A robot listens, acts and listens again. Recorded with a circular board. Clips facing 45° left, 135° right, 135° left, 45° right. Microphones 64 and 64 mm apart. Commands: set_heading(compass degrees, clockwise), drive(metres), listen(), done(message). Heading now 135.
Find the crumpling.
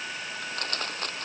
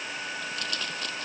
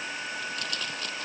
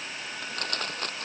done("Facing the crumpling.")